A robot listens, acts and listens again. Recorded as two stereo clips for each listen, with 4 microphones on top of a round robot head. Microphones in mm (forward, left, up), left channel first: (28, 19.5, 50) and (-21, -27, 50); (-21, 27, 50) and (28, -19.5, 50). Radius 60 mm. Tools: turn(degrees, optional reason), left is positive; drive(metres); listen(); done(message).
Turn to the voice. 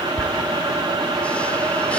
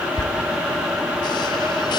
listen()
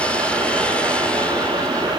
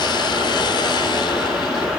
listen()
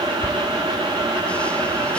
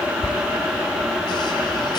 done("I can't make out anyone speaking.")